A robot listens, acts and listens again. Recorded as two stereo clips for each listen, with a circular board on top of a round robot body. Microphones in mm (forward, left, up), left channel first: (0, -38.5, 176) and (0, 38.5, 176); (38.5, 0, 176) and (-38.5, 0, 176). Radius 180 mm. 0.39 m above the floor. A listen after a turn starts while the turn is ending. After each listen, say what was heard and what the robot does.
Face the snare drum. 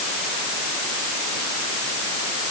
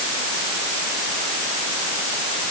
Keep listening.
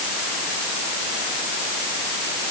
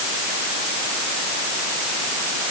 Keep listening.
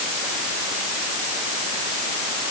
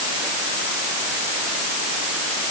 I can't make out a snare drum.